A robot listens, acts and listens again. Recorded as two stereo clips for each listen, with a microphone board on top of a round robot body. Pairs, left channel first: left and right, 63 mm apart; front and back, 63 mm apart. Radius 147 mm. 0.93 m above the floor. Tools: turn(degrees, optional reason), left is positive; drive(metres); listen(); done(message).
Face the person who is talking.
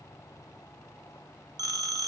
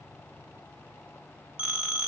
listen()
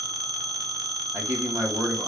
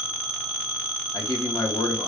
turn(degrees=-35, reason="The man speaking: 35° right.")
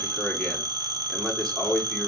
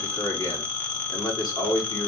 turn(degrees=15, reason="The man speaking is now 15° left.")
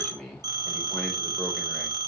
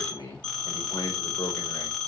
done("Facing the man speaking, 2 to 4 m away.")